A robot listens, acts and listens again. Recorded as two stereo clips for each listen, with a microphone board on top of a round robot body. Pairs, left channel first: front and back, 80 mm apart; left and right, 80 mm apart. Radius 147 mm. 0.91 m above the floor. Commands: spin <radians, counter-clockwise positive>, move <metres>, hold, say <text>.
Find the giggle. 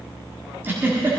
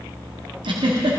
spin -1.92
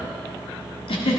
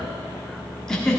say Facing the giggle, 1 to 2 m away.